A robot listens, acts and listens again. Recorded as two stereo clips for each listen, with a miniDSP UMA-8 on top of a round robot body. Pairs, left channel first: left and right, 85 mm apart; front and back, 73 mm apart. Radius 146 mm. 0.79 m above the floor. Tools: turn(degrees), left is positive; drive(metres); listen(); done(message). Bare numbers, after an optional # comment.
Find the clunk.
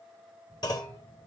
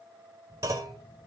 # The clunk: 130° left.
turn(130)
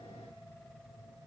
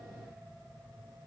done("Facing where the clunk came from. I can't hear it now.")